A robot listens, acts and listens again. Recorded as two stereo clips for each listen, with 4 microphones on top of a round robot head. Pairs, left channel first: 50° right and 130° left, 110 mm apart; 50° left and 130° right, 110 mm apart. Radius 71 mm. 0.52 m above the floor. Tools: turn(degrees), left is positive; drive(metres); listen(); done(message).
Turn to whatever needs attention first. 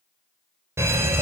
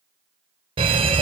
turn(degrees=-165)
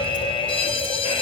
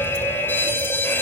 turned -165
turn(degrees=-20)
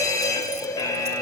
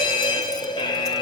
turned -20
done("Found it: a fire alarm, straight ahead.")